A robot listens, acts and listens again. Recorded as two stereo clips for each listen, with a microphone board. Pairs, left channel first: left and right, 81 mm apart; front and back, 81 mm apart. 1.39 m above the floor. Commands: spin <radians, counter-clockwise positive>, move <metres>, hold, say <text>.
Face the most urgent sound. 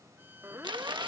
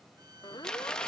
spin -0.52
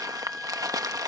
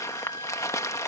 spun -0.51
say Found it: a siren, straight ahead.